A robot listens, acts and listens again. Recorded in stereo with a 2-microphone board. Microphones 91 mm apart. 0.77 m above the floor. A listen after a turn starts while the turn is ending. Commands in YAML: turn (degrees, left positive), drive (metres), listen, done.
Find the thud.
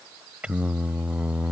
listen: true
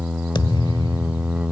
turn: 60
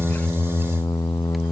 listen: true
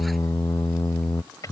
done: "I heard a thud, but can't make it out now. It was about straight ahead or 60° left."